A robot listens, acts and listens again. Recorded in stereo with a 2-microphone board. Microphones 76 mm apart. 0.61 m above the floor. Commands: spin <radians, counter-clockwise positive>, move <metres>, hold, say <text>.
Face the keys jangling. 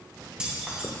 spin -0.52
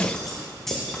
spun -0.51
say Facing the keys jangling, 2 to 4 m away.